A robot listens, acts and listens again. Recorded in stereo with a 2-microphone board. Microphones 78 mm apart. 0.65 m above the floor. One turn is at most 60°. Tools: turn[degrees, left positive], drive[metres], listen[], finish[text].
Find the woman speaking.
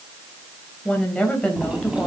Action: turn[30]
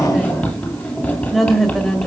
Action: turn[30]
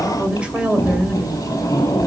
Thought: So it is at 10° right.
Action: turn[-10]
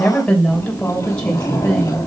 Thought: The woman speaking is now 10° left.
Action: turn[10]
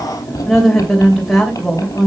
Action: finish[Found it: a woman speaking, straight ahead, 2 to 4 m away.]